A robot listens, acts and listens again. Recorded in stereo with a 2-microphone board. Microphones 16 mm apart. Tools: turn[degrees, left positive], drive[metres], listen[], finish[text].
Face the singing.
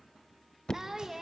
Thought: The singing: about 35° right or 145° right.
Action: turn[-35]
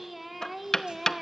Thought: So it is at 25° right.
Action: turn[-25]
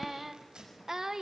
Thought: The singing is now 40° right.
Action: turn[-40]
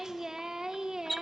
Thought: The singing is now 55° right.
Action: turn[-55]
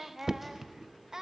Thought: The singing is now 45° right.
Action: turn[-45]
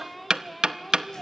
Action: finish[Facing the singing.]